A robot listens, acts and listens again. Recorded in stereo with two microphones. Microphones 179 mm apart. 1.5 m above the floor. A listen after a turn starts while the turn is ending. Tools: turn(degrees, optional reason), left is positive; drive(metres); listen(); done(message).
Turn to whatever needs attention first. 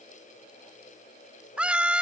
turn(degrees=-30)
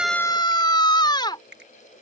turn(degrees=25, reason="So it is at 25° left.")
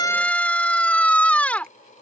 turn(degrees=10, reason="The scream is now 10° left.")
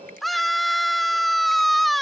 done("Facing the scream.")